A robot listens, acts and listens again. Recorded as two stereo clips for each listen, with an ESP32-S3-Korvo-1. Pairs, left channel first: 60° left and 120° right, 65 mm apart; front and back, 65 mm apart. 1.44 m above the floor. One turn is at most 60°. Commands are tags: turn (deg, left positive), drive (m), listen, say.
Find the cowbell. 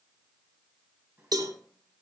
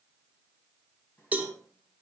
<turn deg="-60"/>
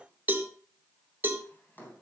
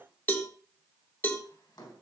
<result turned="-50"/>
<turn deg="-60"/>
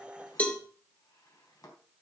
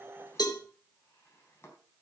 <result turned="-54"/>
<say>Found it: a cowbell, straight ahead.</say>